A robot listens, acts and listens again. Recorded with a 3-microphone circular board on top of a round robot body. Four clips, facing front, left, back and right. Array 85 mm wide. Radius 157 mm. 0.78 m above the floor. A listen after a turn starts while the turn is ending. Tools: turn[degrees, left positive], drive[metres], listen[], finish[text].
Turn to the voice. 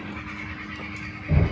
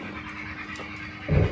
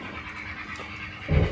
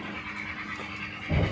Action: listen[]
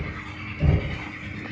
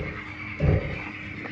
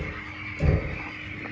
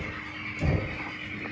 Action: listen[]
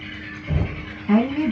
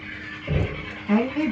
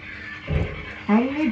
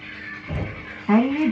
Thought: The woman speaking: 130° right.
Action: turn[-130]
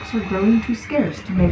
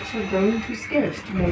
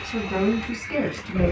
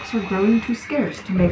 Thought: The woman speaking is now 70° right.
Action: turn[-70]
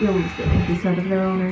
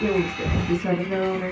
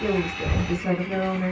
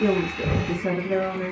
Action: finish[Found it: a woman speaking, straight ahead, 1 to 2 m away.]